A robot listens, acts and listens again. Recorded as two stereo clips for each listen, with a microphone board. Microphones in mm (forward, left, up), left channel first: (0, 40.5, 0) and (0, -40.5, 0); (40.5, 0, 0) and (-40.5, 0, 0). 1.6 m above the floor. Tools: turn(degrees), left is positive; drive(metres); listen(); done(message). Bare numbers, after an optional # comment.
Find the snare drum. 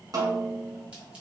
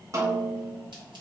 # The snare drum: 130° right.
turn(-130)
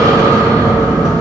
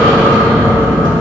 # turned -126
listen()
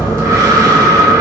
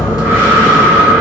listen()
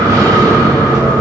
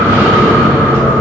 done("I heard a snare drum from this way, but can't make it out now.")